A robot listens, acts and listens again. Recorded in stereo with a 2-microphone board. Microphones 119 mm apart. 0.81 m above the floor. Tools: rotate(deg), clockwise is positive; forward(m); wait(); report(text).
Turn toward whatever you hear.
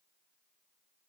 wait()
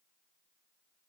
wait()
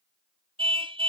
rotate(50)
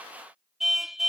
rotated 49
report("Facing the car horn.")